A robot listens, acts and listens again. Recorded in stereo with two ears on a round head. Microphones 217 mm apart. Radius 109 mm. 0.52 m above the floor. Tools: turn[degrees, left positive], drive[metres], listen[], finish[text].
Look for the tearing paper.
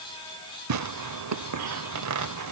Thought: The tearing paper: about 75° right or 105° right.
Action: turn[-75]
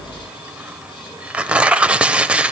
Action: finish[Facing the tearing paper.]